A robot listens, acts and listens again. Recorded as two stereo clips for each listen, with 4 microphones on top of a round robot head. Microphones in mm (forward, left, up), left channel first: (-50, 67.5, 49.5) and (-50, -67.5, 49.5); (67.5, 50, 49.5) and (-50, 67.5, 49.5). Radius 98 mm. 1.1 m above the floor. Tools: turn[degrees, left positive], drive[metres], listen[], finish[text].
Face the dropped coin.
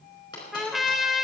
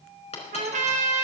Thought: The dropped coin: 20° left.
Action: turn[20]
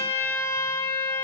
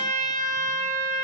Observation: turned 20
Action: finish[Facing where the dropped coin came from. I can't hear it now.]